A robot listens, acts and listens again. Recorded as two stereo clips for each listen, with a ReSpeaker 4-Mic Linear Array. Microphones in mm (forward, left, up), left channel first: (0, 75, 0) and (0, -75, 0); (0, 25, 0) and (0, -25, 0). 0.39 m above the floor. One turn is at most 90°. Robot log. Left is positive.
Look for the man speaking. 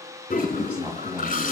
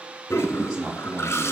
cmd yaw -30
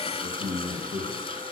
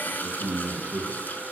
note: So it is at 155° right.
cmd yaw -90
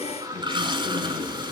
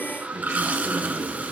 note: Nothing new. It was at 65° right.
cmd yaw -65
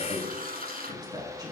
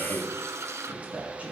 note: The man speaking is now 25° right.
cmd yaw -25
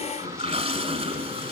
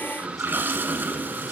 cmd idle
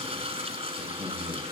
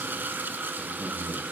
end: Facing the man speaking, over 4 m away.